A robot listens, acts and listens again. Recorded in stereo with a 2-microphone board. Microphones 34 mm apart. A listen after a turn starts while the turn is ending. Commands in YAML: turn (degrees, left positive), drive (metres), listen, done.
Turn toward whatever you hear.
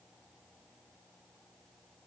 listen: true
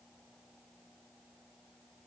listen: true
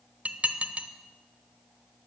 turn: -40
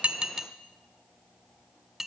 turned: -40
turn: -10
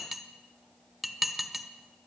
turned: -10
done: "Found it: dishes clattering, straight ahead, under 1 m away."